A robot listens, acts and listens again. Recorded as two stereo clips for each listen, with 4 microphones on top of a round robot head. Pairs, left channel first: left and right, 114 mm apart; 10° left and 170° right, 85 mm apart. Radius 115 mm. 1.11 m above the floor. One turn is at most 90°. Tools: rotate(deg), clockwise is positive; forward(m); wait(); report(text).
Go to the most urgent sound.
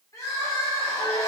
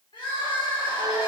rotate(-30)
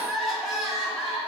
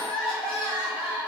forward(1.0)
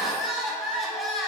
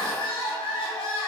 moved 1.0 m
forward(1.0)
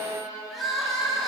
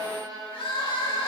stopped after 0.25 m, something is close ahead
report("I am next to the crying.")